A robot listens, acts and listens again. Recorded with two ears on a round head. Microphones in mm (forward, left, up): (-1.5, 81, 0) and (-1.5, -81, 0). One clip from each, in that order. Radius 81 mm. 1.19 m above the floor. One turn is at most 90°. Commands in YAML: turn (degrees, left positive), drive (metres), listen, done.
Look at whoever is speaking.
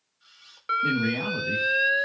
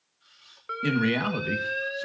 turn: -65
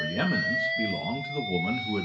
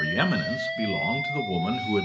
turn: -15
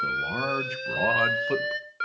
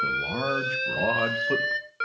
turn: 25
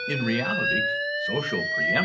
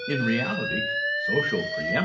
turn: 25
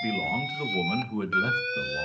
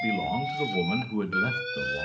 turn: 10
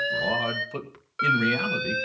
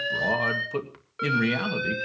done: "Facing the man speaking."